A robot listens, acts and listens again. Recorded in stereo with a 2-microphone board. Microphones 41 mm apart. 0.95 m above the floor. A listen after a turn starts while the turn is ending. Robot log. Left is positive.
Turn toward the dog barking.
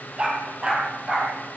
note: The dog barking: about 25° right or 155° right.
cmd yaw -25
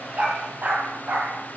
note: So it is at 135° right.
cmd yaw -135
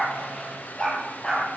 note: The dog barking is now 25° left.
cmd yaw +25
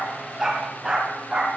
note: The dog barking is now 10° right.
cmd yaw -10
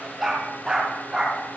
end: Facing the dog barking, over 4 m away.